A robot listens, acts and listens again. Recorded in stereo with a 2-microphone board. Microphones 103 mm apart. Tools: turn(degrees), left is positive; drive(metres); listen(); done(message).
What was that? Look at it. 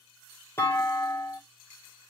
turn(degrees=25)
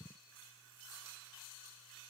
listen()
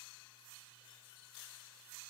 done("I heard a clunk, but can't make it out now. It was about straight ahead or 130° left.")